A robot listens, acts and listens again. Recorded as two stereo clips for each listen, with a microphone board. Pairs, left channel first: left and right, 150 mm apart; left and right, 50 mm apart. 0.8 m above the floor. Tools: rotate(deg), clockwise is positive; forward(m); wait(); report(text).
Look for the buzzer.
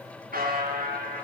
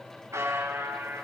rotate(90)
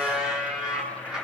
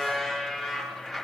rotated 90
report("Facing the buzzer, over 4 m away.")